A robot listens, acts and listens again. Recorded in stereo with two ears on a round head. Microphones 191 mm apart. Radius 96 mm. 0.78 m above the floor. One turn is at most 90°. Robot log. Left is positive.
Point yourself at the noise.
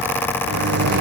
note: The microwave: about 55° right or 125° right.
cmd yaw -55
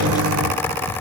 note: So it is at 70° right.
cmd yaw -70
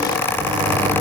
note: The microwave is now 20° right.
cmd yaw -20
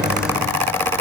end: Found it: a microwave, straight ahead.